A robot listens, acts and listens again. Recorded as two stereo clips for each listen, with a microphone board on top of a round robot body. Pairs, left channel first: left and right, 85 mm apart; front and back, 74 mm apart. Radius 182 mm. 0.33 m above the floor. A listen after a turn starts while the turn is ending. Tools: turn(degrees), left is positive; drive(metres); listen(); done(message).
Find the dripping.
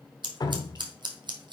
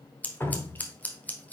turn(degrees=55)
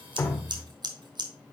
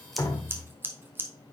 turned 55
done("Facing the dripping.")